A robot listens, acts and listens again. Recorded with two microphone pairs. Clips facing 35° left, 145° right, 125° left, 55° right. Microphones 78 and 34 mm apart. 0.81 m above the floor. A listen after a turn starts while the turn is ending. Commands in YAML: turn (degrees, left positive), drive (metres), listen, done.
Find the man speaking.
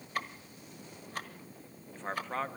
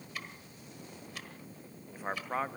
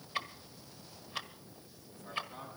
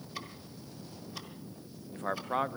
turn: -65
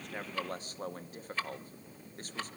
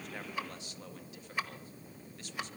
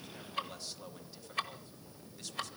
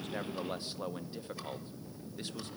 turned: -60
done: "Facing the man speaking, under 1 m away."